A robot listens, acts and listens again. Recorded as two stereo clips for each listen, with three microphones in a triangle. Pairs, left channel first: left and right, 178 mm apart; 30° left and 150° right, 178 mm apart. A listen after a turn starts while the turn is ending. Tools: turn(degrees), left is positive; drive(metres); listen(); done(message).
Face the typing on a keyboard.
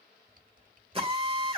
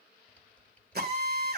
turn(degrees=-55)
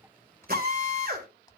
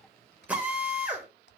turn(degrees=25)
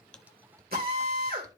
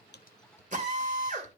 turn(degrees=-20)
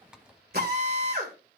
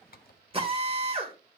done("Facing the typing on a keyboard.")